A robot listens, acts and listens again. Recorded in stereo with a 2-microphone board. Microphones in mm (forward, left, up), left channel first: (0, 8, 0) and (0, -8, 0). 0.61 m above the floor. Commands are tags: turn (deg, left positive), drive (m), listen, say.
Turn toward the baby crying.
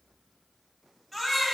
<turn deg="30"/>
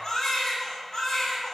<turn deg="145"/>
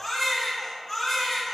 <turn deg="25"/>
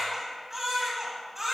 <turn deg="-15"/>
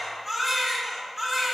<say>Facing the baby crying.</say>